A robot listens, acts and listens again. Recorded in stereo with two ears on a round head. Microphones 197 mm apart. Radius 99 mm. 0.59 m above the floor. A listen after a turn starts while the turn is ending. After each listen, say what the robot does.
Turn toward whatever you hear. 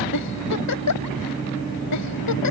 Turn 90° left.
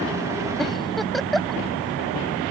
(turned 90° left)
Found it: a giggle, straight ahead.